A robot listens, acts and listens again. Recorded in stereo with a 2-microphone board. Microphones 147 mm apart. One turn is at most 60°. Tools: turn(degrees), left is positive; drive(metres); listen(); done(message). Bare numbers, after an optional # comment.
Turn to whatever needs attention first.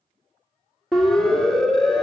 turn(30)
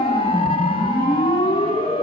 # So it is at 145° left.
turn(60)
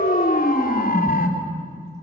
# The siren is now 110° left.
turn(60)
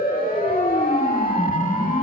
# The siren is now 65° left.
turn(60)
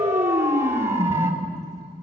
# The siren is now 15° right.
turn(-15)
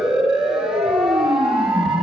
done("Facing the siren, 2 to 4 m away.")